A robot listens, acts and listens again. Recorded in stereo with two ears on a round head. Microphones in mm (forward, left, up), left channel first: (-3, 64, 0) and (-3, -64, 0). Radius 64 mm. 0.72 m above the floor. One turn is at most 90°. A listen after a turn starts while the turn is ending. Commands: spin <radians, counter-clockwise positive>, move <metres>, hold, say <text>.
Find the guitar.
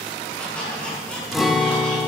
spin 0.52
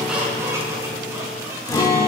spin 1.57
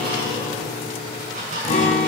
spin 0.87
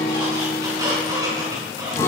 spin 0.35
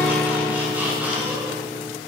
spin 0.17
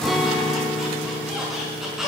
say Found it: a guitar, straight ahead, 2 to 4 m away.